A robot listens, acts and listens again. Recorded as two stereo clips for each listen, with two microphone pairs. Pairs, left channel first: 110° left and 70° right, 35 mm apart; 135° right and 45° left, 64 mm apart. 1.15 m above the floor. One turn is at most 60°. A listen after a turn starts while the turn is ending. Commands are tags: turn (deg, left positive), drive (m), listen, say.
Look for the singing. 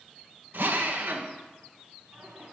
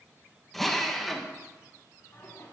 <turn deg="-60"/>
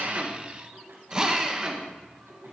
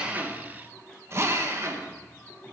<turn deg="-60"/>
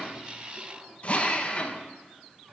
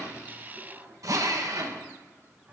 <turn deg="-20"/>
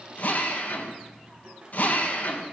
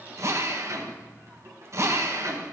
<say>Facing the singing, 2 to 4 m away.</say>